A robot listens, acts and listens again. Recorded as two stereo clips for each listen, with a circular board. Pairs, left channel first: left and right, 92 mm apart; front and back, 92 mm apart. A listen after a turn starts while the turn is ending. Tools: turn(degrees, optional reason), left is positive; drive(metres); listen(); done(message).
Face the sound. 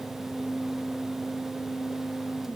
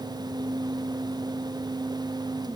listen()
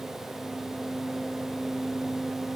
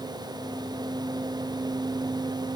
listen()
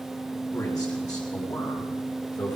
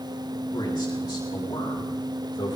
turn(degrees=45, reason="The man speaking: 45° left.")
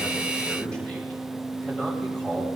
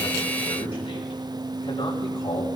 turn(degrees=10, reason="The man speaking is now 10° left.")
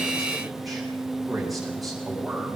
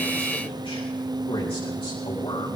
done("Found it: a man speaking, straight ahead, over 4 m away.")